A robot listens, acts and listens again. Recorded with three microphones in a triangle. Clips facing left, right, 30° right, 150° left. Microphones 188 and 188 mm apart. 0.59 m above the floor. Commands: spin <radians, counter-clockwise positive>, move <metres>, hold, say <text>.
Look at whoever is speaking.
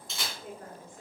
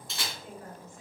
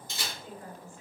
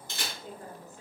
spin 1.83
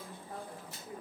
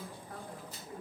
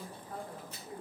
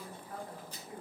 spin 0.44
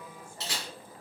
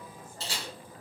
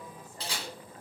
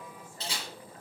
hold
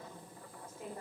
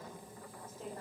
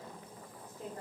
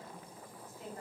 spin 0.17
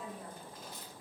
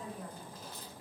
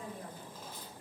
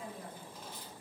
say Facing the woman speaking.